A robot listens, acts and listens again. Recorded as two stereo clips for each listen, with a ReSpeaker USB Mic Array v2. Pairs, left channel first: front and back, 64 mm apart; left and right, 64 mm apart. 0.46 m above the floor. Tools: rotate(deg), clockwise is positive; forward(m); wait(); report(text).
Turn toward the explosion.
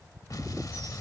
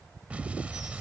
rotate(20)
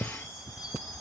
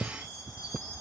report("Facing where the explosion came from. I can't hear it now.")